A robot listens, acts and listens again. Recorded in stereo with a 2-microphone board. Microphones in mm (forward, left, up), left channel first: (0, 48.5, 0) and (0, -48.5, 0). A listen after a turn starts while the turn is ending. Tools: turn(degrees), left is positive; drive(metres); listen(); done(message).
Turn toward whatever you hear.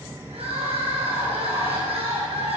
turn(degrees=-70)
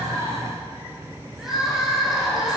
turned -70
done("Facing the crying, over 4 m away.")